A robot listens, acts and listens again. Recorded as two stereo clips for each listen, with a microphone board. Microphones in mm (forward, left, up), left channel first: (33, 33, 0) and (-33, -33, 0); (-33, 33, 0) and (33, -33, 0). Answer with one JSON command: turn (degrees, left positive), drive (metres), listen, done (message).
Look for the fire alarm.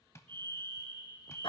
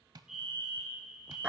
{"turn": -130}
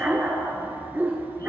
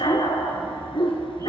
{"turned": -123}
{"listen": true}
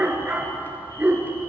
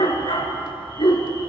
{"listen": true}
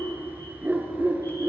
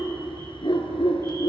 {"done": "I heard a fire alarm from this way, but can't make it out now."}